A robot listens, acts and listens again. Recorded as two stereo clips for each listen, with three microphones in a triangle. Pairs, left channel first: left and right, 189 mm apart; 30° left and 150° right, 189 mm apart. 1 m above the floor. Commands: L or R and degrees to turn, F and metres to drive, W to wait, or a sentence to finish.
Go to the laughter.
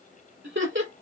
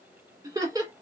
R80
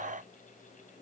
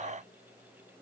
W
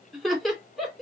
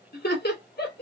F1.0
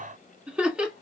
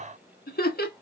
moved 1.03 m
F1.0
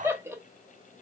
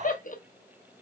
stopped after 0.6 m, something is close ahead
R15
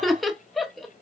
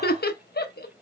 Arrived at the laughter, straight ahead.